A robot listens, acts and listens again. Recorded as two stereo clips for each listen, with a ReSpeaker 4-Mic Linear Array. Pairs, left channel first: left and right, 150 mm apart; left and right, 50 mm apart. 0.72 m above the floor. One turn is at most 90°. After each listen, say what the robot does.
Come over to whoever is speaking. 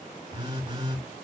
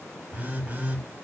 Keep listening.
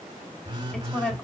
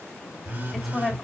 Turn 30° left.
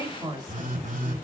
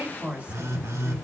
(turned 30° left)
Turn 25° right.
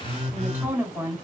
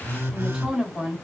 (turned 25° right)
Turn 10° right.
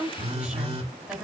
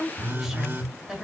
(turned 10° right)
Drive 1.0 m forward.
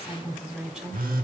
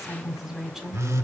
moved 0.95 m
Drive 1.0 m forward.
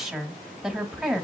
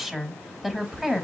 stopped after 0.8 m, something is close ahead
I am next to the woman speaking.